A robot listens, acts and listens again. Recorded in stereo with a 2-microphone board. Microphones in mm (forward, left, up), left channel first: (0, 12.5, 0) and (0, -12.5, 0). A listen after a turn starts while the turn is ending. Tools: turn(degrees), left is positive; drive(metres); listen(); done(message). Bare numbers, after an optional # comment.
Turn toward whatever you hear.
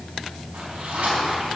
# The zipper: about 70° right or 110° right.
turn(-70)
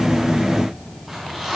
# So it is at 10° right.
turn(-10)
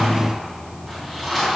done("Found it: a zipper, straight ahead, over 4 m away.")